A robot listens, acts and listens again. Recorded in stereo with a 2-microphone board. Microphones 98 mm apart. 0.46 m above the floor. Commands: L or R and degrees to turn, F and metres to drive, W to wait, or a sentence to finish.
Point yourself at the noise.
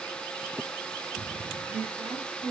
R90
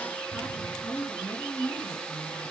Facing the woman speaking.